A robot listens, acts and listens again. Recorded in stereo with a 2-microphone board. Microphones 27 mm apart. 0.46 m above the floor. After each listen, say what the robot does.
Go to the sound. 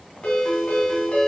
Turn 45° left.
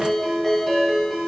Drive 1.0 m forward.
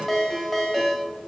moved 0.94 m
Drive 1.0 m forward.
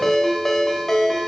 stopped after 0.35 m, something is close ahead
Turn 15° left.
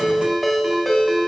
I am next to the ringtone.